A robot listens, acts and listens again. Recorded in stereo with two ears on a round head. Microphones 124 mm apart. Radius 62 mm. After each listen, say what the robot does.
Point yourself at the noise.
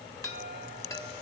Turn 25° left.
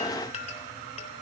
Turn 130° left.
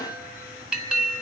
Facing the chime, 2 to 4 m away.